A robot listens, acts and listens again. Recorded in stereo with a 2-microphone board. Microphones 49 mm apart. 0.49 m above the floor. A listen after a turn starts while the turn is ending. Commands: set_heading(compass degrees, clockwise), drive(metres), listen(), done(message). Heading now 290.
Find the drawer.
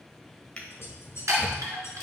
set_heading(270)
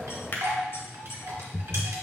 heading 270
set_heading(130)
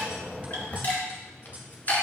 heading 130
set_heading(90)
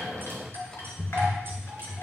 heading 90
set_heading(75)
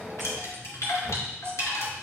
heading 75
listen()
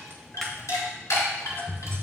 done("Facing the drawer.")